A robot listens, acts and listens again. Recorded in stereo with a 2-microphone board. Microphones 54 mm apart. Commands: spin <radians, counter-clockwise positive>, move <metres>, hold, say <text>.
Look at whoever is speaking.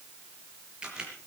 hold
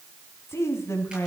spin 1.05
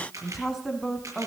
say Found it: a woman speaking, straight ahead, 2 to 4 m away.